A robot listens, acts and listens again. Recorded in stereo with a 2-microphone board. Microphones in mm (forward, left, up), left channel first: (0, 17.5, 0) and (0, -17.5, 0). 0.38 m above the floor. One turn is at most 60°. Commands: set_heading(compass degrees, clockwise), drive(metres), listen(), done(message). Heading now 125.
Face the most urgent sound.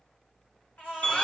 set_heading(65)
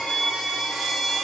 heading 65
listen()
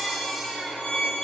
set_heading(55)
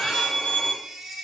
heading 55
done("Found it: a baby crying, straight ahead.")